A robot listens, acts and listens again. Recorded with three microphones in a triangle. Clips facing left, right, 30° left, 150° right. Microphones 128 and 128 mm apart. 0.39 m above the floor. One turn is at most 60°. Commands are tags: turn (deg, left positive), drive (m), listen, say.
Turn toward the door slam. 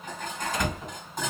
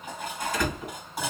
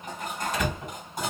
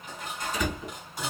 <turn deg="25"/>
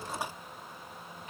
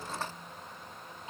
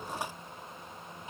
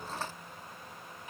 <say>Facing where the door slam came from. I can't hear it now.</say>